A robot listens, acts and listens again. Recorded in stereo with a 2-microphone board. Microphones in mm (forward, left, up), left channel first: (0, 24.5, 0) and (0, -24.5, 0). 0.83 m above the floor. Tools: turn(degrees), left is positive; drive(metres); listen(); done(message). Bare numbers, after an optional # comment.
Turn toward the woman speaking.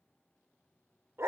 listen()
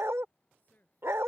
# The woman speaking: about 35° left or 145° left.
turn(35)
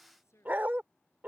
# So it is at 110° left.
turn(110)
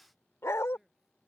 # The woman speaking is now 10° right.
turn(-10)
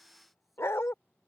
listen()
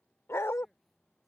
listen()
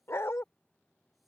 done("I heard a woman speaking from this way, but can't make it out now.")